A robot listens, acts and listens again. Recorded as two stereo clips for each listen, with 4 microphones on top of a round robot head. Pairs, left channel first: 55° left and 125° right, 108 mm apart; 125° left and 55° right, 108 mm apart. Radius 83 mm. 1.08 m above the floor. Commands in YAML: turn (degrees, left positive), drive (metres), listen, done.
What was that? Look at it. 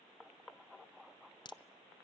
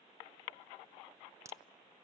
turn: 10
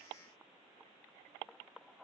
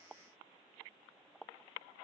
done: "Facing where the crack came from. I can't hear it now."